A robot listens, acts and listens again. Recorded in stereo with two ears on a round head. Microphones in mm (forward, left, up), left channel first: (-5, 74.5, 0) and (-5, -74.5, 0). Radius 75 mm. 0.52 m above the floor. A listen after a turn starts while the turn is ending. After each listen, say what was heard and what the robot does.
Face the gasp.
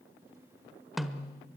Keep listening.
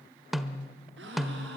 Turn 90° right.
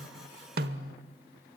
Facing where the gasp came from. I can't hear it now.